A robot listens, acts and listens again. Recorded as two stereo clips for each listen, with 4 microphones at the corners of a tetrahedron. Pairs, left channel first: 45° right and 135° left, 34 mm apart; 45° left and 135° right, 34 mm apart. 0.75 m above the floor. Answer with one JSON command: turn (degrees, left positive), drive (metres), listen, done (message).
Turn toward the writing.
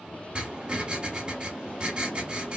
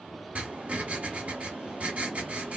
{"turn": -170}
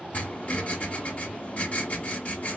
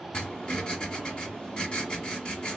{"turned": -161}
{"turn": -10}
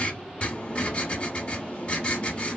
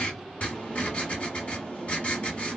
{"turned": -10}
{"done": "Facing the writing, 1 to 2 m away."}